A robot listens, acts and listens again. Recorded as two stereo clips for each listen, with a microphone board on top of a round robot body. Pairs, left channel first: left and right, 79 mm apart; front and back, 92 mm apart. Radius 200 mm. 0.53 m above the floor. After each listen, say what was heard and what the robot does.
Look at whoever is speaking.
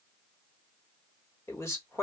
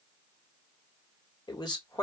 The man speaking: 35° left. Turn 35° left.
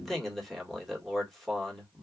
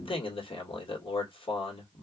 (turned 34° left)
Facing the man speaking, 1 to 2 m away.